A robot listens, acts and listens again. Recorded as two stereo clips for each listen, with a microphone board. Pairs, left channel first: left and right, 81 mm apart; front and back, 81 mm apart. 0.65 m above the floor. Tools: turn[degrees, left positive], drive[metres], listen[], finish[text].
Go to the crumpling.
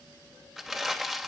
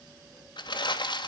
Action: drive[1.0]
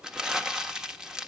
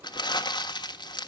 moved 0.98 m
Thought: The crumpling is now 10° right.
Action: turn[-10]
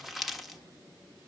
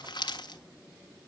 Action: drive[1.0]
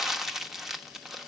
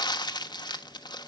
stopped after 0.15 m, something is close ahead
Action: finish[I am next to the crumpling.]